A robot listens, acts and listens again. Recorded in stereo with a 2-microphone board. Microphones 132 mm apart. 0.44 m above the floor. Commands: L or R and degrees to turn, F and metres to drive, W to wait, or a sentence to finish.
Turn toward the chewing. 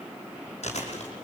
L60
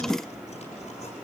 W
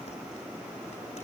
W
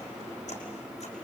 I heard chewing, but can't make it out now. It was about straight ahead or 60° left.